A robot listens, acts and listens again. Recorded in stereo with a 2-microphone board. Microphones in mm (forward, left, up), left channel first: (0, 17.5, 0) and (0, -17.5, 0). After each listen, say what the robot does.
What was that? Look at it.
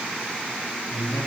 Turn 90° left.
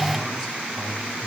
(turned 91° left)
Turn 15° right.
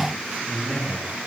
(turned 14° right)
Facing the man speaking.